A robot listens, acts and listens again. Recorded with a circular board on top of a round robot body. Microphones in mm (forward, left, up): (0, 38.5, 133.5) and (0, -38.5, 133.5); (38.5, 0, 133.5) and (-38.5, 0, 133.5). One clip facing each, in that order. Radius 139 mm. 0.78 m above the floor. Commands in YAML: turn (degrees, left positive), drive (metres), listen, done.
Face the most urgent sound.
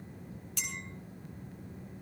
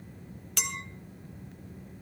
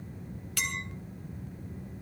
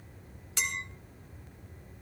listen: true
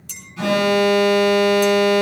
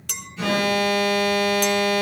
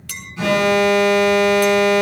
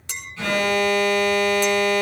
turn: 70
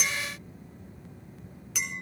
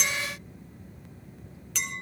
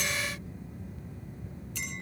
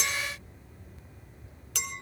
listen: true
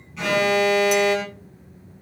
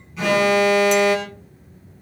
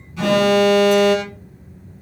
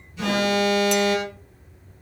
done: "Facing the alarm, over 4 m away."